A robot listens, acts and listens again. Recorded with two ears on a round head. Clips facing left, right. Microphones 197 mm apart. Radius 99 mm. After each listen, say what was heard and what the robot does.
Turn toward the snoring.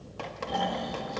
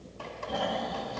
The snoring: about 55° left or 125° left. Turn 55° left.
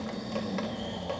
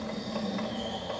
Found it: snoring, straight ahead.